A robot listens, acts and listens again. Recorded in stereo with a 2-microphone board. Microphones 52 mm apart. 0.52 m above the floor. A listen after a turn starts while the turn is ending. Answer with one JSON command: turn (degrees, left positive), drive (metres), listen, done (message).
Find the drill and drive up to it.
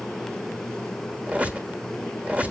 {"listen": true}
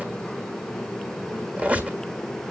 {"listen": true}
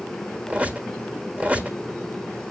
{"done": "I can't make out a drill, only a squeak."}